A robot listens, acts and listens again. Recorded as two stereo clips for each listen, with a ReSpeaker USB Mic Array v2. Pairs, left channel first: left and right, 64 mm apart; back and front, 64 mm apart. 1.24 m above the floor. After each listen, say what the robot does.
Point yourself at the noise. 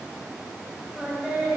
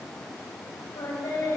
Turn 160° right.
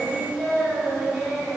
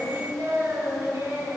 Turn 10° left.
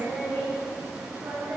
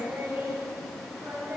Facing the singing, over 4 m away.